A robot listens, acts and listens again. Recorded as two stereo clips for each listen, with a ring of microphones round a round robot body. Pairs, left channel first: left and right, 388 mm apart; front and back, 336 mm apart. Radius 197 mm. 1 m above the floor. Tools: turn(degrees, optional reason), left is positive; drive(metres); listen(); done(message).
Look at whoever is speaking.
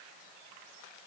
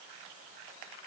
listen()
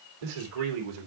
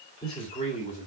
turn(degrees=-75, reason="The man speaking: 75° right.")
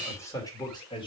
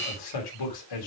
turn(degrees=15, reason="The man speaking is now 15° left.")
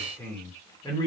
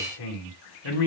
turn(degrees=10, reason="The man speaking is now 10° left.")
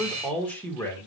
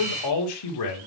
done("Facing the man speaking.")